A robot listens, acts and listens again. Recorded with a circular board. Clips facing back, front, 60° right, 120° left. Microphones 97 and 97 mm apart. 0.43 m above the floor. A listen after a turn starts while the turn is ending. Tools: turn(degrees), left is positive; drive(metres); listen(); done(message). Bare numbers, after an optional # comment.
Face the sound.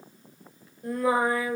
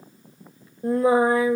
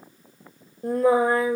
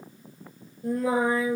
# The singing: 65° right.
turn(-65)
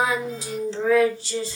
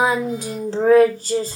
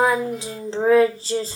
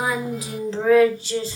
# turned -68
# The singing is now 25° right.
turn(-25)
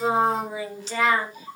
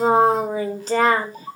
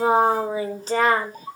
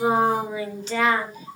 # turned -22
# The singing is now 35° right.
turn(-35)
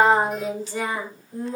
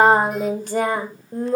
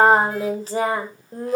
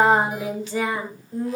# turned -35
# The singing is now 25° right.
turn(-25)
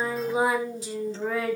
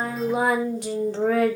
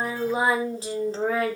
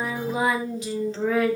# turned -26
# The singing is now 10° right.
turn(-10)
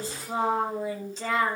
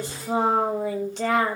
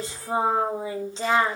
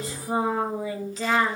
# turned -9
done("Found it: singing, straight ahead, 2 to 4 m away.")